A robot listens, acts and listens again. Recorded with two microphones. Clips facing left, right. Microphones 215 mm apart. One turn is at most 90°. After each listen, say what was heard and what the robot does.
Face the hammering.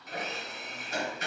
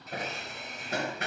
The hammering: about 60° right or 120° right. Turn 60° right.
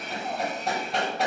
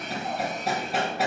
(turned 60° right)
Found it: hammering, straight ahead.